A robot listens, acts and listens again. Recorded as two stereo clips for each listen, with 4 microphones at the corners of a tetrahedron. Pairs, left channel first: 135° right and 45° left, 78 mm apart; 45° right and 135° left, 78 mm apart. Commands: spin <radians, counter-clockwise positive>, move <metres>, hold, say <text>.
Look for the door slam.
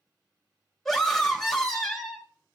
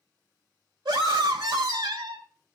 hold
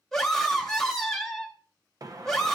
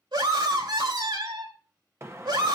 spin 1.40
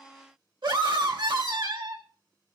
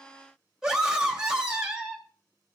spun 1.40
say I heard a door slam from this way, but can't make it out now.